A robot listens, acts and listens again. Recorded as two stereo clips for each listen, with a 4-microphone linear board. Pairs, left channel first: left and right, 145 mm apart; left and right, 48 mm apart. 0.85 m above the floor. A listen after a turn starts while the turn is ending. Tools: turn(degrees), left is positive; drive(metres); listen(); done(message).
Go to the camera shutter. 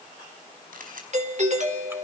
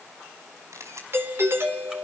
turn(degrees=-75)
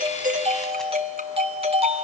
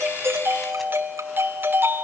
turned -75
listen()
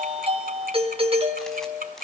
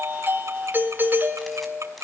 listen()
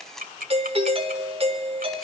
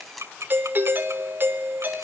drive(metres=1.0)
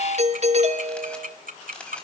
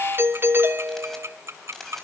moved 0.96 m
drive(metres=1.0)
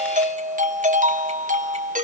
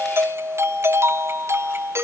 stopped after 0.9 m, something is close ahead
listen()
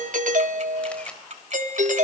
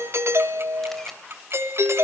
listen()
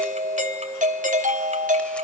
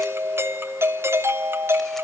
done("Facing where the camera shutter came from. I can't hear it now. I did not reach it.")